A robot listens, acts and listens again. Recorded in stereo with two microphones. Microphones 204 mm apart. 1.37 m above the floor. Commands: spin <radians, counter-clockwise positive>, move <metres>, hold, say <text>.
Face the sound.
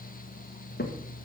spin 0.87
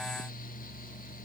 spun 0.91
hold
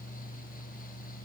say I heard a crack, but can't make it out now. It was about straight ahead or 75° left.